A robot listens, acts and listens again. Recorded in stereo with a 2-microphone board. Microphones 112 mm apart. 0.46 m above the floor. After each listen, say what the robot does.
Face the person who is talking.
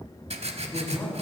Turn 30° left.
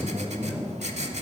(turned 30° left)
Turn 15° right.
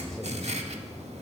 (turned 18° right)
Keep listening.
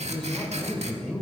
Found it: a man speaking, straight ahead.